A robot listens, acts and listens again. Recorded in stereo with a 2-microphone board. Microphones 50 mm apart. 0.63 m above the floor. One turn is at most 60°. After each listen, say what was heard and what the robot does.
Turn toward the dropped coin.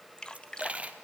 The dropped coin: about 25° right or 155° right. Turn 25° right.
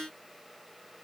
Keep listening.
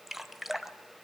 I heard a dropped coin, but can't make it out now. It was about straight ahead or 130° right.